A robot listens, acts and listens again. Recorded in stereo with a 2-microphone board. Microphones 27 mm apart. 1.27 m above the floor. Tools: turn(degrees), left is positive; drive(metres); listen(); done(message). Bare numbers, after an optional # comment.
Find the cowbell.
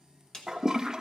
listen()
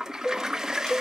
# The cowbell: about 50° left or 130° left.
turn(50)
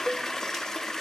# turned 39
listen()
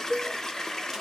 # So it is at 20° left.
turn(20)
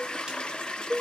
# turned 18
done("Found it: a cowbell, straight ahead, 1 to 2 m away.")